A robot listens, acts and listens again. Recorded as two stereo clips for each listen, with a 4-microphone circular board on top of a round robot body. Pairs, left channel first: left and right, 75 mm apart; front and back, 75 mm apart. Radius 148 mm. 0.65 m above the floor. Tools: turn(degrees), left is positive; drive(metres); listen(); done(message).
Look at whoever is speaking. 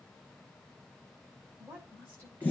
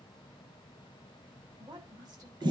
turn(degrees=-150)
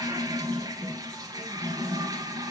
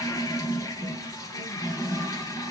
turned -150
listen()
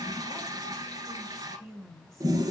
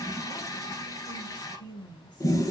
done("Facing the woman speaking, over 4 m away.")